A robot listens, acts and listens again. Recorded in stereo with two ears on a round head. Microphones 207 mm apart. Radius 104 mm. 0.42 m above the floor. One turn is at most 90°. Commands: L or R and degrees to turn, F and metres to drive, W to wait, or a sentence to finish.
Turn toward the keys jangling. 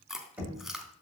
W
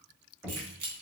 R70
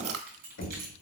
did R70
R40
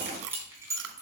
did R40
R15
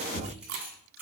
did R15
R10
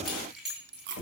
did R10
Facing the keys jangling, 2 to 4 m away.